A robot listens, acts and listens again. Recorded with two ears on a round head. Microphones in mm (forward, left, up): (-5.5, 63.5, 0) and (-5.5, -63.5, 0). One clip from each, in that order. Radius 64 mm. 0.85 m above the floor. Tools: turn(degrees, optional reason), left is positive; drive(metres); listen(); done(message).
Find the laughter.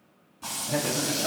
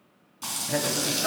turn(degrees=-35, reason="The laughter: about 35° right or 145° right.")
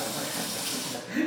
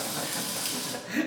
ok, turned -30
turn(degrees=-35, reason="The laughter: about 35° right or 145° right.")
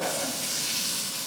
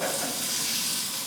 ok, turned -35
turn(degrees=-20, reason="So it is at 20° right.")
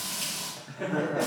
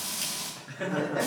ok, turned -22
turn(degrees=-45, reason="The laughter is now 45° right.")
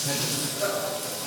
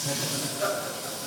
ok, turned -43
turn(degrees=-15, reason="The laughter is now 15° right.")
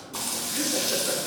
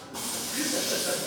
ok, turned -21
listen()
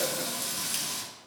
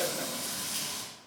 listen()
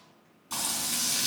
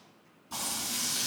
done("I heard laughter from this way, but can't make it out now.")